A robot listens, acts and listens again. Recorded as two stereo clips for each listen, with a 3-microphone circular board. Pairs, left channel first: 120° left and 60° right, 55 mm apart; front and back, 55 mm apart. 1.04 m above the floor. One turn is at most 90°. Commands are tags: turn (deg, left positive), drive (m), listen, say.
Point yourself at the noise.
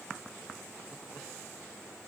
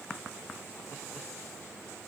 <listen/>
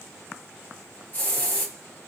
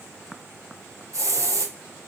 <turn deg="90"/>
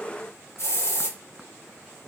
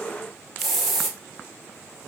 <turn deg="90"/>
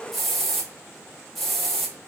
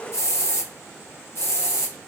<turn deg="35"/>
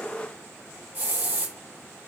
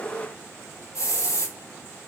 <turn deg="-10"/>
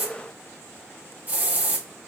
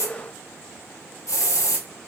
<say>Found it: a hiss, straight ahead, under 1 m away.</say>